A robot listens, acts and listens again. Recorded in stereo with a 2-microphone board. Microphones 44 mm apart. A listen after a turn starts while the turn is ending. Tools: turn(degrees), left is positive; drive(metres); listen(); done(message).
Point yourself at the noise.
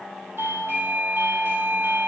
turn(degrees=-70)
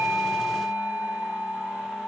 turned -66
done("Found it: a doorbell, straight ahead.")